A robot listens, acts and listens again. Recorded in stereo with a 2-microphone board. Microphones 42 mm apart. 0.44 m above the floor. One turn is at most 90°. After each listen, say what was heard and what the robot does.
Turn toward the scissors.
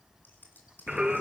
The scissors: about 50° left or 130° left. Turn 50° left.
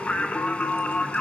Keep listening.
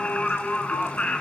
Keep listening.
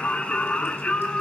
I heard scissors, but can't make it out now. It was about straight ahead or 80° left.